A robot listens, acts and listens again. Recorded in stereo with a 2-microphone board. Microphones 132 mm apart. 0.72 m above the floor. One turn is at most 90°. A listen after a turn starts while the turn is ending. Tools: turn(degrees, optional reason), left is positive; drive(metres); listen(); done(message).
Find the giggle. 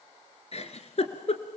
turn(degrees=55, reason="The giggle: about 55° left or 125° left.")
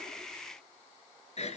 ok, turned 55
turn(degrees=60, reason="So it is at 60° left.")
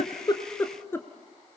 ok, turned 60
turn(degrees=20, reason="The giggle is now 20° left.")
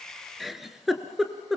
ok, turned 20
done("Found it: a giggle, straight ahead, 1 to 2 m away.")